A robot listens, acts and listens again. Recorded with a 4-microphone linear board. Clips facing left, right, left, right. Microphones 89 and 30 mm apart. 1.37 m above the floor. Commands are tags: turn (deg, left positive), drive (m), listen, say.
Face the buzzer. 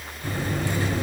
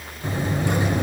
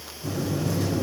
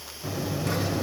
<turn deg="-25"/>
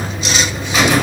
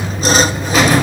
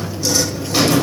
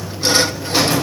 <say>Facing the buzzer, over 4 m away.</say>